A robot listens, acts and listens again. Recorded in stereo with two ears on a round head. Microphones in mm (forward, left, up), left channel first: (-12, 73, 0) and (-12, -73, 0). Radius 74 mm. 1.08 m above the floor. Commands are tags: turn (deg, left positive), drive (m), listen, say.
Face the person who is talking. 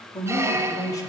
<turn deg="25"/>
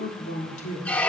<turn deg="130"/>
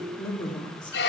<turn deg="25"/>
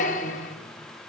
<listen/>
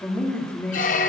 <turn deg="10"/>
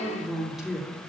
<say>Found it: a man speaking, straight ahead, 2 to 4 m away.</say>